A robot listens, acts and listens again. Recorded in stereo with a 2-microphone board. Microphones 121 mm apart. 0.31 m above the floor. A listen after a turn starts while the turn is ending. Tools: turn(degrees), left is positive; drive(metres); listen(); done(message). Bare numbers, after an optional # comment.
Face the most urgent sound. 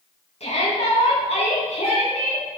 # The shout: about 65° left or 115° left.
turn(65)
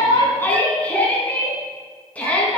# So it is at 15° left.
turn(15)
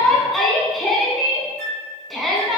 done("Found it: a shout, straight ahead, 2 to 4 m away.")